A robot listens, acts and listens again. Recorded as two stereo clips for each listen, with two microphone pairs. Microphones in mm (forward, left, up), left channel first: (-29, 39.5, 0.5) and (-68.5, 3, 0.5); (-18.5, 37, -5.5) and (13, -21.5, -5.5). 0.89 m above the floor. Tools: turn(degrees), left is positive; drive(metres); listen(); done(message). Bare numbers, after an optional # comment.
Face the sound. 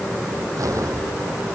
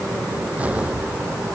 # The explosion: 130° right.
turn(-130)
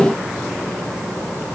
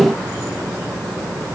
done("Facing where the explosion came from. I can't hear it now.")